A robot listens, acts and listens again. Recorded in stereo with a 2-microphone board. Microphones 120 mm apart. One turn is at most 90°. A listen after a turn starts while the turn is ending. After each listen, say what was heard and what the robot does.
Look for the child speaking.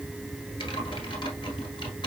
Keep listening.
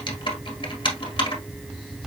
Keep listening.
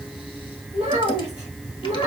The child speaking: about 65° right or 115° right. Turn 65° right.
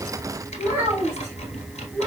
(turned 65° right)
So it is at 20° right. Turn 20° right.
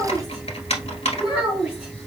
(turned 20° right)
The child speaking is now 10° right. Turn 10° right.
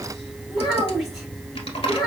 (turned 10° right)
Found it: a child speaking, straight ahead.